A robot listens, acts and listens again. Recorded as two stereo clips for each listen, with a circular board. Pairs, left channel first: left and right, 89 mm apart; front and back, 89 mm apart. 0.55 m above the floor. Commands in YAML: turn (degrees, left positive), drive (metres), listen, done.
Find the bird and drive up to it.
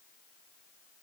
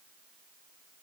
listen: true
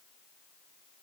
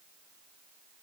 listen: true
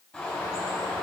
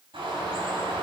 turn: 165
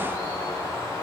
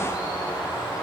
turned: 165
turn: 35
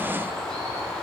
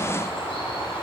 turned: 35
drive: 1.0
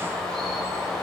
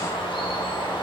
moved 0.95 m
drive: 1.0
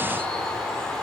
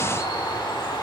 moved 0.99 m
turn: 10
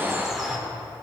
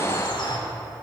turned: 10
drive: 1.0
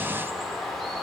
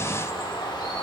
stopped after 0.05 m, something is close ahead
done: "I am next to the bird."